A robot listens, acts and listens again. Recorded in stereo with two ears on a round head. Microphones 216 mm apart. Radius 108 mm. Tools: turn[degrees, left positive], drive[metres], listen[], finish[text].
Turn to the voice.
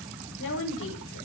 Thought: The woman speaking: about 55° left or 125° left.
Action: turn[55]
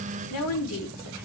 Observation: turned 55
Thought: So it is at 70° left.
Action: turn[70]
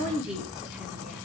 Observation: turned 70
Action: finish[Found it: a woman speaking, straight ahead, over 4 m away.]